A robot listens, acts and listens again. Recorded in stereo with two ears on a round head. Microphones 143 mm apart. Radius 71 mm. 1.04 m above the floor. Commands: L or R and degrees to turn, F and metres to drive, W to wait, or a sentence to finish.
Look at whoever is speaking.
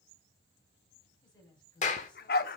L25
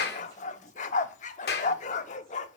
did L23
W
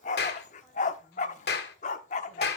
W
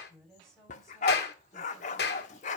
Facing the woman speaking.